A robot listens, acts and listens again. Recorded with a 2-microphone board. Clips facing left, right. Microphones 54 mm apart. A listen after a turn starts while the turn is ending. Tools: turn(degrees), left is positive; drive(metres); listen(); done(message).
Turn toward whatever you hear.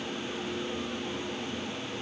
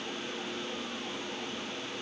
listen()
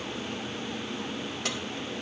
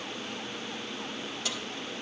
turn(degrees=55)
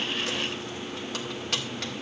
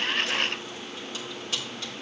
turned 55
turn(degrees=65)
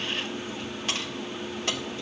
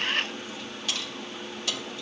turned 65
turn(degrees=35)
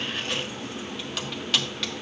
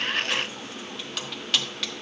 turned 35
done("Found it: keys jangling, straight ahead, 1 to 2 m away.")